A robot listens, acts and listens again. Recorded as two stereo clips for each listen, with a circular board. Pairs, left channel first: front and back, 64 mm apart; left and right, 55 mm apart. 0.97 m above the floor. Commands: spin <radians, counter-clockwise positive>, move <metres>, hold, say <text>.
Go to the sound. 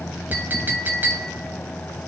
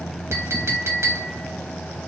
spin -2.09
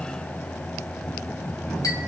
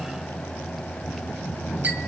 hold
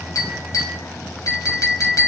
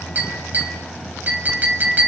spin -0.52
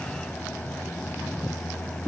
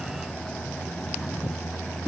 hold
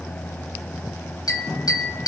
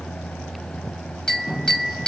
spin 0.26
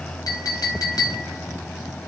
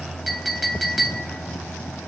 move 1.0
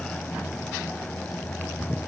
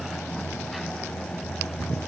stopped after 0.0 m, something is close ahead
hold
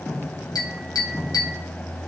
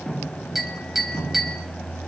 say Something is in my way. I am facing the clink but have not reached it.